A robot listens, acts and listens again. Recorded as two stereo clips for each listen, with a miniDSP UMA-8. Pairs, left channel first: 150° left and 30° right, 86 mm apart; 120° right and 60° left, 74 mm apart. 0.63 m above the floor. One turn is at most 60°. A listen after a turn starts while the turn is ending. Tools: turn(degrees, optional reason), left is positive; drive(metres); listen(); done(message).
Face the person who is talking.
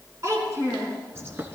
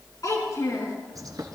turn(degrees=-60, reason="The child speaking: 80° right.")
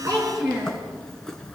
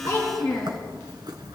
turn(degrees=-40, reason="The child speaking is now 40° right.")
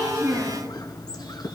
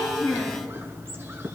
listen()
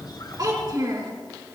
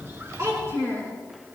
turn(degrees=10, reason="The child speaking is now 10° left.")
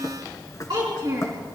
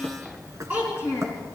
done("Facing the child speaking, 2 to 4 m away.")